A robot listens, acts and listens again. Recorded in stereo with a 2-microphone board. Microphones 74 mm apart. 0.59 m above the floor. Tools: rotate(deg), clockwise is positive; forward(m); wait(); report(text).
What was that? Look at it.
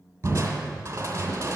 rotate(40)
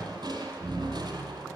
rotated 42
rotate(100)
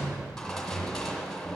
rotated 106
report("Found it: crushing, straight ahead.")